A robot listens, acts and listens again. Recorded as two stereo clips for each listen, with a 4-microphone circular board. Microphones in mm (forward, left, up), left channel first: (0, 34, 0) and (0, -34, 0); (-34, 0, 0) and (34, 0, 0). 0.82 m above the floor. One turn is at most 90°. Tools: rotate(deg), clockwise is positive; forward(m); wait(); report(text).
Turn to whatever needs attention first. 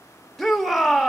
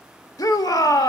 rotate(-90)
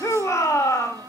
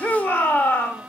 rotate(-90)
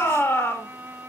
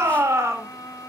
rotate(-40)
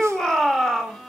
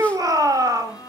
rotate(-10)
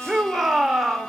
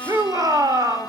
report("Found it: a shout, straight ahead.")